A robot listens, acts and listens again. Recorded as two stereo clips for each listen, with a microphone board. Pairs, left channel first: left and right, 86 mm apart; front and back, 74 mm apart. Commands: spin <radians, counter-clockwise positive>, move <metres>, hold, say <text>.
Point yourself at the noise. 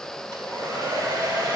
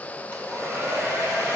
spin -2.18
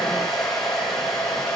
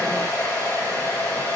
say Found it: a hair dryer, straight ahead.